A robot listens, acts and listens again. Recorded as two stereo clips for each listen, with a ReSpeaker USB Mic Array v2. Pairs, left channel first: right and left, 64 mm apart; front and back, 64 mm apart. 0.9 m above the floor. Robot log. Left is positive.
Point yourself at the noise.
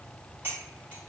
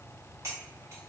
note: The cutlery clinking: 145° left.
cmd yaw +145
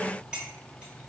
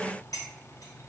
note: The cutlery clinking is now 20° left.
cmd yaw +20
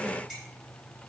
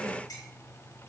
end: Facing the cutlery clinking.